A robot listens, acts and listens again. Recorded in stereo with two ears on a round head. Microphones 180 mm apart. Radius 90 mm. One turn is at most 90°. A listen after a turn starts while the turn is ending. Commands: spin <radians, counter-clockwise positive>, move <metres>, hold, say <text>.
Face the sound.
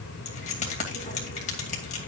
spin 0.61
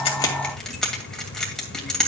say Facing the keys jangling, 2 to 4 m away.